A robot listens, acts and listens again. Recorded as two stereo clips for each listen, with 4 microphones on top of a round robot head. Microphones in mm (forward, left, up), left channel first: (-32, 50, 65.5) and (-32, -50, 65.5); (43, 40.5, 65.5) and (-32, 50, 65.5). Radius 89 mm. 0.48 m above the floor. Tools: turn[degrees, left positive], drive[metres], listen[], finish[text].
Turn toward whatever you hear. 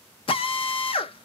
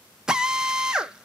Thought: The drill: 95° left.
Action: turn[95]
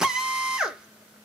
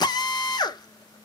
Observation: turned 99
Action: finish[Found it: a drill, straight ahead.]